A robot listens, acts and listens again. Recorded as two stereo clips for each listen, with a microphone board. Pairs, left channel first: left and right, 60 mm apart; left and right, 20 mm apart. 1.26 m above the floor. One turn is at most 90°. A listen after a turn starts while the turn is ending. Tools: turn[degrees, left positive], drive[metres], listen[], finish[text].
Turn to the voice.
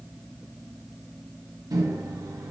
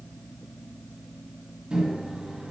Action: listen[]
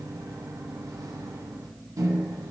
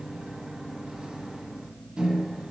Action: listen[]
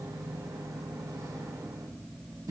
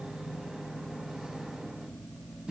Action: finish[I can't make out anyone speaking to turn to.]